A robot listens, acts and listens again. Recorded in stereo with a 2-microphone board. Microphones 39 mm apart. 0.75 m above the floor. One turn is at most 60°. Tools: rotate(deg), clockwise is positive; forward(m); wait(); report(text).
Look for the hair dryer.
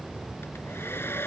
rotate(-60)
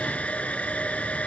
rotate(-35)
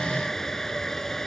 rotate(-10)
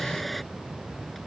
report("Found it: a hair dryer, straight ahead.")